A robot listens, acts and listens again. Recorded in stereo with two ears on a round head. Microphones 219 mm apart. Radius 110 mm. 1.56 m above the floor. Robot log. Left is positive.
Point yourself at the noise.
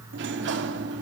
note: The sliding door: about 50° right or 130° right.
cmd yaw -50
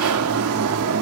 note: So it is at 70° right.
cmd yaw -70
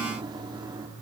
note: The sliding door is now 20° right.
cmd yaw -20
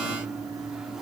end: Facing the sliding door, 2 to 4 m away.